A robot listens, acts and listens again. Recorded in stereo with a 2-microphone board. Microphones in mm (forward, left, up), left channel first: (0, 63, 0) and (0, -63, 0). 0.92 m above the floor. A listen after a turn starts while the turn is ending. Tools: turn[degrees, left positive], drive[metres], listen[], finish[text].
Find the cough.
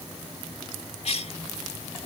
Thought: The cough: about 55° left or 125° left.
Action: turn[55]
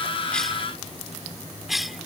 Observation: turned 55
Action: finish[Facing the cough.]